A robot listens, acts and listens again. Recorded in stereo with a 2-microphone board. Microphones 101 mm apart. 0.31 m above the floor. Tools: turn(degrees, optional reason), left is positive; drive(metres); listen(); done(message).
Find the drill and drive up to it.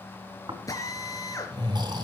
turn(degrees=35, reason="The drill: about 35° left or 145° left.")
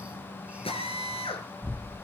turn(degrees=105, reason="So it is at 105° left.")
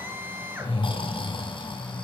turn(degrees=-20, reason="The drill is now 20° right.")
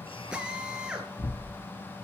turn(degrees=-10, reason="The drill is now 10° right.")
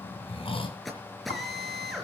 drive(metres=1.0)
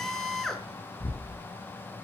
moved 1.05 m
drive(metres=1.0)
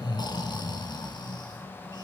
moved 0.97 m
listen()
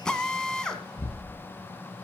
turn(degrees=10, reason="The drill is now 10° left.")
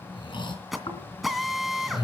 drive(metres=1.0)
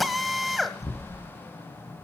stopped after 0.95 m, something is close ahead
done("I am next to the drill.")